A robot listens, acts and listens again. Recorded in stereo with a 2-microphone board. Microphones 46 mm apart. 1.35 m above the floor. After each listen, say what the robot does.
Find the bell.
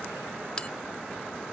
Turn 15° left.
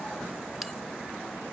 Keep listening.
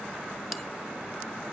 Keep listening.
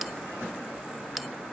Found it: a bell, straight ahead.